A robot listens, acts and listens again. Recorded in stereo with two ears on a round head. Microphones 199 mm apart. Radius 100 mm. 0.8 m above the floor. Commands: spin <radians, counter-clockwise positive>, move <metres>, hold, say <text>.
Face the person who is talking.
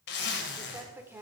spin -0.52
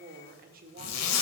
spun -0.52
spin -2.44
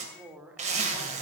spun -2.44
say Found it: a woman speaking, straight ahead.